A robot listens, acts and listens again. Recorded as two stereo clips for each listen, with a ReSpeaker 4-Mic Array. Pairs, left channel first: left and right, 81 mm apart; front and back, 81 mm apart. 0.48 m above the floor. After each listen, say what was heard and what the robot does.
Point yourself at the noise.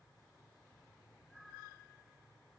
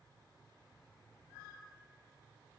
Keep listening.
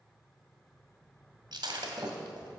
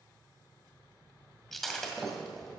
The breaking glass: 85° right. Turn 85° right.
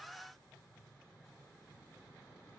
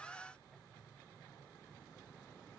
Facing where the breaking glass came from. I can't hear it now.